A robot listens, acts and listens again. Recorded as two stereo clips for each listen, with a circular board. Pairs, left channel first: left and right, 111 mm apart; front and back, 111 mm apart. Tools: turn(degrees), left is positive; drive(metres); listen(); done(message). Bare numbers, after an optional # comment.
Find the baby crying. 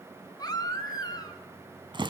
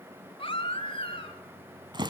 # The baby crying: 35° left.
turn(35)
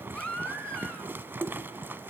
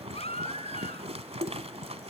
# The baby crying is now 10° left.
turn(10)
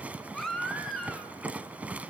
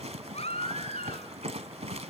done("Found it: a baby crying, straight ahead, 2 to 4 m away.")